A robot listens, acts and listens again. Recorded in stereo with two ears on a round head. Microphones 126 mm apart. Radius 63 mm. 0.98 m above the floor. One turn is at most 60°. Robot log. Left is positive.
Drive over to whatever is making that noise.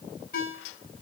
note: The ringtone: about 75° left or 105° left.
cmd yaw +60
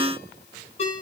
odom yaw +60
note: So it is at 45° left.
cmd yaw +45
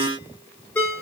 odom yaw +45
note: The ringtone is now 10° left.
cmd yaw +10
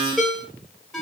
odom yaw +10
cmd fwd 1.0
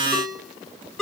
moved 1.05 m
cmd fwd 1.0
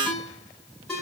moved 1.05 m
cmd fwd 1.0
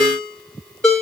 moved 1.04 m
cmd fwd 1.0
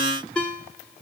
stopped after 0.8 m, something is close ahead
end: Arrived at the ringtone, straight ahead.